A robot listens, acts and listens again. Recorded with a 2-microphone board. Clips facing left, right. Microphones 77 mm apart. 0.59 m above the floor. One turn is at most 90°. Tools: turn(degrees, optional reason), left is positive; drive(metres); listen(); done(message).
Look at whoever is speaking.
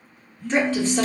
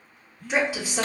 turn(degrees=-30)
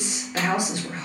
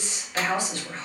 turn(degrees=20, reason="So it is at 20° left.")
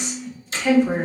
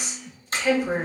done("Facing the woman speaking, 1 to 2 m away.")